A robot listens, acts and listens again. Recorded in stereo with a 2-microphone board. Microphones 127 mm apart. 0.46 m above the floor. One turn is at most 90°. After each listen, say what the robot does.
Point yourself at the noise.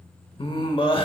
Turn 45° left.
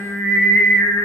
Found it: singing, straight ahead.